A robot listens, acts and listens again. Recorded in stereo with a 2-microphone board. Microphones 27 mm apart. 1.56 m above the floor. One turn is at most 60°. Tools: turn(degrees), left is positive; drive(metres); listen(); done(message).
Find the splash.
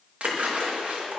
turn(degrees=-55)
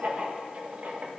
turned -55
listen()
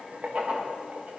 done("I heard a splash, but can't make it out now. It was about straight ahead or 70° right.")